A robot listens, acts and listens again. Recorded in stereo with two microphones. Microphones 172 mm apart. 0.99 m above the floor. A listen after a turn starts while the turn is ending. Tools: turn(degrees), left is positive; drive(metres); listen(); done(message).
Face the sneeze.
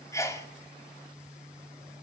turn(degrees=20)
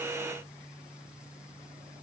listen()
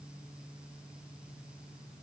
done("I heard a sneeze, but can't make it out now. It was about straight ahead or 140° left.")